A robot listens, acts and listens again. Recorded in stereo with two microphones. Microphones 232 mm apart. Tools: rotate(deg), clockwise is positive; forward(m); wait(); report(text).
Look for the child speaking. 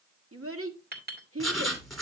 rotate(75)
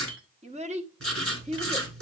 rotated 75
rotate(30)
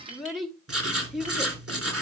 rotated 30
report("Facing the child speaking, 1 to 2 m away.")